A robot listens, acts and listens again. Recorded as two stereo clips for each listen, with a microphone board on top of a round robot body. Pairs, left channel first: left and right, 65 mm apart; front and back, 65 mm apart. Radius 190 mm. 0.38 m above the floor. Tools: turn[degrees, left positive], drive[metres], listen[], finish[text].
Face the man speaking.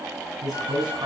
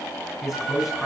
Thought: The man speaking: 90° right.
Action: turn[-90]
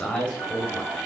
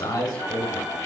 Thought: The man speaking is now 15° left.
Action: turn[15]
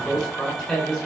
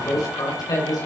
Thought: The man speaking is now 10° left.
Action: turn[10]
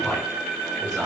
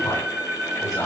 Action: listen[]
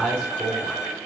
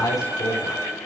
Action: finish[Found it: a man speaking, straight ahead, over 4 m away.]